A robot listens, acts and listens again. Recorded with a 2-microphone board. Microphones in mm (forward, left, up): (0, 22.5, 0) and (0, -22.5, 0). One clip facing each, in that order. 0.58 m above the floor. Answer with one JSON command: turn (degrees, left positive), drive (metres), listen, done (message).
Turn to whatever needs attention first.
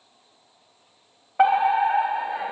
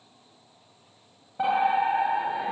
{"turn": 70}
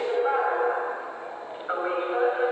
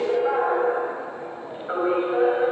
{"turn": 10}
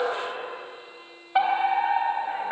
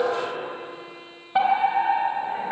{"turn": 10}
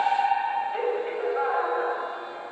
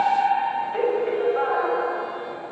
{"done": "Facing the fire alarm."}